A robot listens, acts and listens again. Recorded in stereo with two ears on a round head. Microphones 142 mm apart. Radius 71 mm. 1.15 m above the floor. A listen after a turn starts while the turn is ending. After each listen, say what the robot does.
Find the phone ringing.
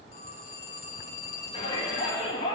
Turn 40° left.
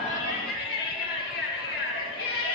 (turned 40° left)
Keep listening.
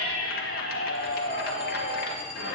Keep listening.
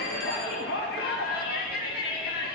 I heard a phone ringing, but can't make it out now. It was about straight ahead or 100° left.